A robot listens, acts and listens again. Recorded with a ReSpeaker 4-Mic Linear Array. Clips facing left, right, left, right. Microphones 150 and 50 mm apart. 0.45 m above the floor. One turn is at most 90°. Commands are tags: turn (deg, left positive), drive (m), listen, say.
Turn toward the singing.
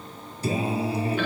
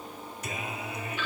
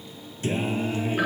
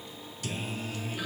<turn deg="30"/>
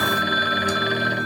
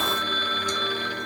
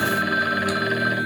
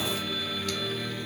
<say>Found it: singing, straight ahead.</say>